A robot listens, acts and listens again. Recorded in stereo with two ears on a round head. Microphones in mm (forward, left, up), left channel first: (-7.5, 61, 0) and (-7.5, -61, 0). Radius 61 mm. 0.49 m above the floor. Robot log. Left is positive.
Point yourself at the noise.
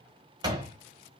note: The door slam: about 30° right or 150° right.
cmd yaw -30
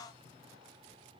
cmd idle
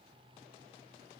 end: I heard a door slam, but can't make it out now. It was about straight ahead or 120° right.